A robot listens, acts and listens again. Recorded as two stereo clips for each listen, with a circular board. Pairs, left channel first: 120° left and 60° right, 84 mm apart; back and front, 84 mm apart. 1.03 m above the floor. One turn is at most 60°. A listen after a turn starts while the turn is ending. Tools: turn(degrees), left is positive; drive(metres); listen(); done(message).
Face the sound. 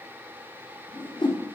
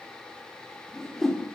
turn(degrees=60)
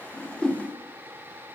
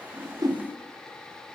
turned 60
turn(degrees=35)
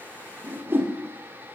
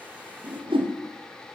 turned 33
done("Facing the whoosh.")